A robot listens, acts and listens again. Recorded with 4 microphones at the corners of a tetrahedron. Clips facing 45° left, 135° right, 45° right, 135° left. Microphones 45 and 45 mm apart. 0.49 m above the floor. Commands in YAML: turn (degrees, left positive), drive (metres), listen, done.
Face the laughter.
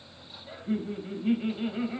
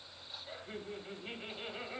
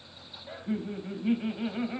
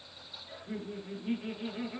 turn: -45
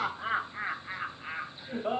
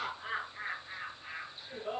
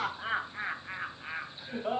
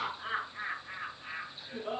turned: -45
done: "Facing the laughter, 2 to 4 m away."